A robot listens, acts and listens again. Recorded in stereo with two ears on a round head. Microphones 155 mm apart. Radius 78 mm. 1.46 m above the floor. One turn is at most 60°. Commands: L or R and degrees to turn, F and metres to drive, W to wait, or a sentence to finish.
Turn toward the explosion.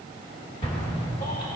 L30
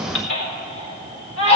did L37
W
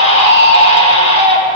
I heard an explosion, but can't make it out now. It was about 5° right or 110° left.